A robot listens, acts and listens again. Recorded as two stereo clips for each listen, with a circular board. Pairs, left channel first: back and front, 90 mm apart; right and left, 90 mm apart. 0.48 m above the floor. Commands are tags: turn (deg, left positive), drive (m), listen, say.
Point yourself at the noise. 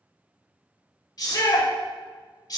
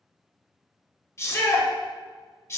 <turn deg="-145"/>
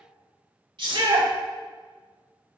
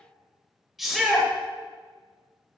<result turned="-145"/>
<say>Found it: a shout, straight ahead, 1 to 2 m away.</say>